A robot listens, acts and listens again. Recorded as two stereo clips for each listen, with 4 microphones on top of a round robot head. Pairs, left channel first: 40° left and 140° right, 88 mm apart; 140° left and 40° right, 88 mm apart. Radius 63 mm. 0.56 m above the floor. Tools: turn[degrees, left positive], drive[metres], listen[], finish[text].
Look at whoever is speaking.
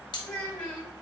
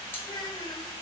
Thought: The child speaking: 105° left.
Action: turn[105]
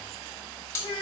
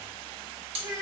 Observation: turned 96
Thought: The child speaking is now 10° left.
Action: turn[10]
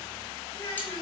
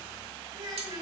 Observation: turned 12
Action: finish[Found it: a child speaking, straight ahead, 1 to 2 m away.]